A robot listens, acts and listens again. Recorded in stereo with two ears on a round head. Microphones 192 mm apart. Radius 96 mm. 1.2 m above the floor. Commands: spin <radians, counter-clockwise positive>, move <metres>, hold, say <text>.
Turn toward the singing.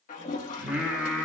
spin 0.52
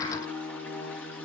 spin 2.53
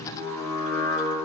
spin 0.35
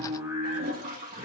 spin -0.17
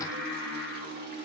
say Facing the singing.